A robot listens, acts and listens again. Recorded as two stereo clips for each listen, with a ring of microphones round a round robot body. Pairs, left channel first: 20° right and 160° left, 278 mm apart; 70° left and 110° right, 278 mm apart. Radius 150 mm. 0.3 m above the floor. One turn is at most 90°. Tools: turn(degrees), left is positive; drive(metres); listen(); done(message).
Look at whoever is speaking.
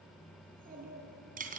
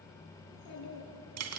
turn(degrees=90)
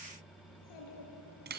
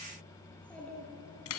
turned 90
turn(degrees=-20)
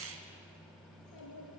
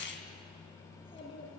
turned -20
done("Facing the child speaking.")